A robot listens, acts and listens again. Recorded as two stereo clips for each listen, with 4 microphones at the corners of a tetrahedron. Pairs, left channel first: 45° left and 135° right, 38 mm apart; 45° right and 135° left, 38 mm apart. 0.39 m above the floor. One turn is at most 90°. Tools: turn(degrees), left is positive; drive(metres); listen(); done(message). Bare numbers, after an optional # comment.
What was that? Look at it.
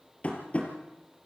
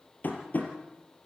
done("Facing the tapping, 2 to 4 m away.")